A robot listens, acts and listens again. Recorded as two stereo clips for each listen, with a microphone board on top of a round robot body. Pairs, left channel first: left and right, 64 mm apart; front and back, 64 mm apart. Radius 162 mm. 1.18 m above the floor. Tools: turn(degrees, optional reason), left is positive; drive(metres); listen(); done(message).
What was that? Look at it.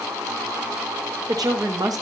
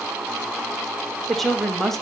turn(degrees=-85, reason="The woman speaking: 85° right.")
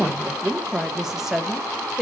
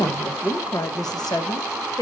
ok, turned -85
done("Found it: a woman speaking, straight ahead, 1 to 2 m away.")